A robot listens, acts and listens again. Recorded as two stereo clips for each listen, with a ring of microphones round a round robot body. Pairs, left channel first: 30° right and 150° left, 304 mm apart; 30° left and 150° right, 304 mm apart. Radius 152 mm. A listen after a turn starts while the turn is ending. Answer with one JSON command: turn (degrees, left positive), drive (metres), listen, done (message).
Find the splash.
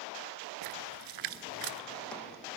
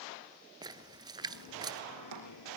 {"turn": 135}
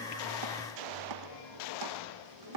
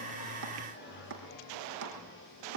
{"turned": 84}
{"turn": 50}
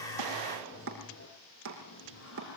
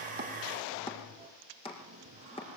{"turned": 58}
{"turn": -10}
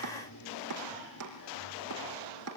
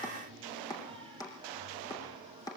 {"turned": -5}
{"done": "I heard a splash from this way, but can't make it out now."}